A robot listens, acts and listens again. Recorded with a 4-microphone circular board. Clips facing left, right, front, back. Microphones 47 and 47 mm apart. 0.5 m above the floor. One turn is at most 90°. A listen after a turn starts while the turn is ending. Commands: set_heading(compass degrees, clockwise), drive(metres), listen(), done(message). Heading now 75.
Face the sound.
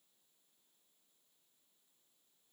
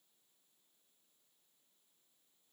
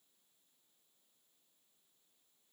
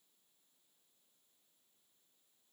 listen()
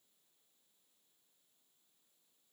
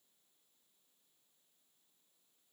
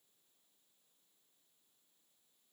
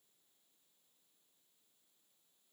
listen()
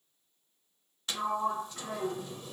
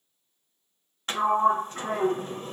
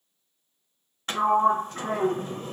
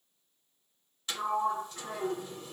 set_heading(120)
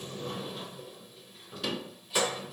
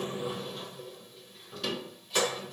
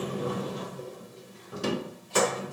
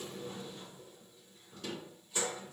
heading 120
done("Facing the sliding door.")